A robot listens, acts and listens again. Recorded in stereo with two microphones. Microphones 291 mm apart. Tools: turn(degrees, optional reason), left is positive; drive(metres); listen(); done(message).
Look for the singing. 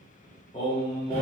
turn(degrees=20, reason="The singing: about 20° left or 160° left.")
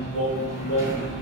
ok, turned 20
turn(degrees=130, reason="So it is at 130° left.")
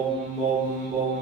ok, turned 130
turn(degrees=-35, reason="The singing is now 35° right.")
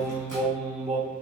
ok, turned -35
turn(degrees=-20, reason="The singing is now 20° right.")
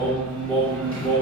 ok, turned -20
turn(degrees=-20, reason="The singing is now 20° right.")
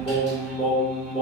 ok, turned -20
done("Found it: singing, straight ahead.")